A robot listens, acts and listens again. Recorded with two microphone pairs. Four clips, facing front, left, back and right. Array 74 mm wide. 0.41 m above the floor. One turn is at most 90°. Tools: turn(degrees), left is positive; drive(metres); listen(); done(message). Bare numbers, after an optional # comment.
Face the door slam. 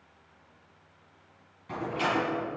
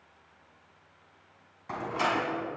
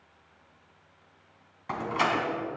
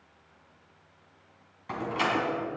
# The door slam: 170° left.
turn(90)
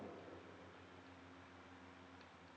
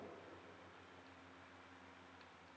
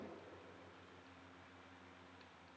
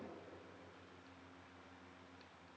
# Nothing new. It was at 80° left.
turn(80)
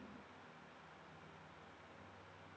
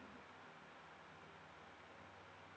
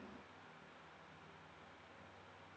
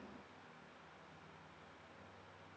done("I heard a door slam from this way, but can't make it out now.")